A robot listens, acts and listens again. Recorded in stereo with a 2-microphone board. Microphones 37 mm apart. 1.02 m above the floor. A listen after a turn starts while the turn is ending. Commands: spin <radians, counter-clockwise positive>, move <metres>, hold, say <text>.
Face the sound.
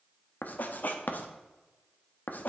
spin 0.87
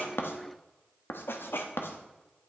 spin 1.31
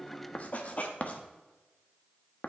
spin 0.70
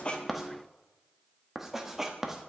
spin -0.17
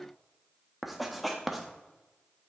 say Facing the writing.